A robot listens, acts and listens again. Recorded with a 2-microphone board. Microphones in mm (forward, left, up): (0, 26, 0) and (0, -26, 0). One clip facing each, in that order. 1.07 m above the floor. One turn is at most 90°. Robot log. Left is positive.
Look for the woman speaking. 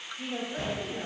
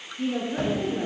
cmd yaw -30
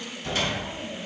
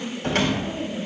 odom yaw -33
note: So it is at 10° left.
cmd yaw +10
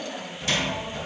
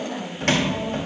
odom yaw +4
end: Found it: a woman speaking, straight ahead.